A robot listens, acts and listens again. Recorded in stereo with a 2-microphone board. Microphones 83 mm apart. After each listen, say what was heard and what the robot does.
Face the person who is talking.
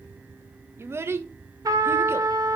The child speaking: about 30° right or 150° right. Turn 30° right.
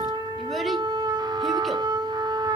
Keep listening.
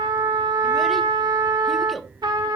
Found it: a child speaking, straight ahead.